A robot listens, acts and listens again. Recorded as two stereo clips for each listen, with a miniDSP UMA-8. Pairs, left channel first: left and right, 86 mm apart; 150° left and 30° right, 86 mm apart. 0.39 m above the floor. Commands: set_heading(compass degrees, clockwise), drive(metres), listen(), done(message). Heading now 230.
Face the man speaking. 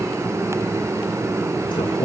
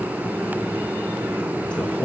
set_heading(160)
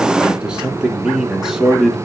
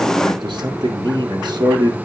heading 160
done("Facing the man speaking, 2 to 4 m away.")